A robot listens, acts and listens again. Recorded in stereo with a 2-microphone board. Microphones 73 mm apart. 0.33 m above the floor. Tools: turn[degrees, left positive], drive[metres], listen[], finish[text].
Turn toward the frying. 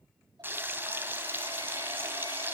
Thought: The frying: about 30° right or 150° right.
Action: turn[-30]
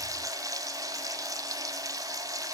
Thought: So it is at 120° right.
Action: turn[-120]
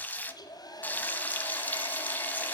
Thought: The frying is now 25° left.
Action: turn[25]
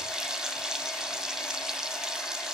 Thought: The frying is now 10° right.
Action: turn[-10]
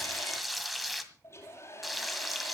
Action: finish[Facing the frying, 1 to 2 m away.]